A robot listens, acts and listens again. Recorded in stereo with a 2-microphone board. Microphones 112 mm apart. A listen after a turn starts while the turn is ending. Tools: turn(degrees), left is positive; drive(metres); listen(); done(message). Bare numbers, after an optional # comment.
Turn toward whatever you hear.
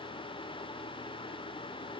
listen()
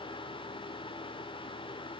listen()
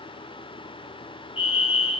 # The fire alarm: about 55° left or 125° left.
turn(55)
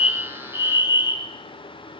# So it is at 55° left.
turn(55)
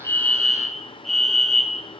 done("Found it: a fire alarm, straight ahead.")